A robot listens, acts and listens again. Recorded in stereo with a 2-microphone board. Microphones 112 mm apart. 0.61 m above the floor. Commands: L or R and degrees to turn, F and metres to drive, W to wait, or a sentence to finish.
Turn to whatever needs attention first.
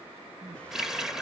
R55
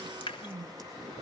R70
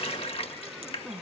Facing the crying.